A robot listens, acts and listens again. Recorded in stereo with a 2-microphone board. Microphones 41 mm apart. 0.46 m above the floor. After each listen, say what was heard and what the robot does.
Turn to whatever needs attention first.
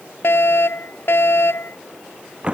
The fire alarm: about 70° left or 110° left. Turn 70° left.
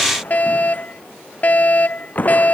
So it is at 40° left. Turn 40° left.
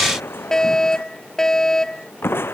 The fire alarm is now 15° left. Turn 15° left.
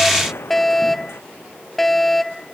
Found it: a fire alarm, straight ahead.